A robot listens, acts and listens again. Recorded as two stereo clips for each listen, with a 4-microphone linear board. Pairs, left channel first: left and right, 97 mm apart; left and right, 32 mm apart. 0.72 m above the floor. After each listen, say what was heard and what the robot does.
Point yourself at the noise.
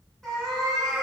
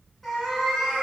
Turn 30° left.
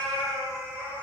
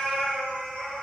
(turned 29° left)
So it is at 155° left. Turn 155° left.
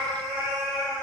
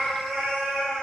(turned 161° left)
Found it: a cat meowing, straight ahead, 2 to 4 m away.